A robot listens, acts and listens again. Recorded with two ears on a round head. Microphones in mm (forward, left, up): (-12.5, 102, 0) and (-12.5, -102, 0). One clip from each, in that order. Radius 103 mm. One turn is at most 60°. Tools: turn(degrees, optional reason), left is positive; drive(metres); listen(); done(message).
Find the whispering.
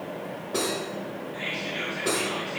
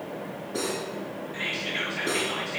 turn(degrees=-35, reason="The whispering: about 35° right or 145° right.")
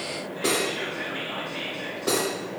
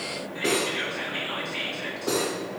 turn(degrees=-60, reason="So it is at 110° right.")
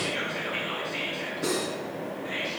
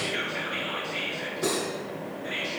turn(degrees=-45, reason="The whispering is now 45° right.")
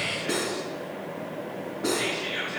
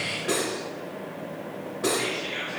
done("Facing the whispering.")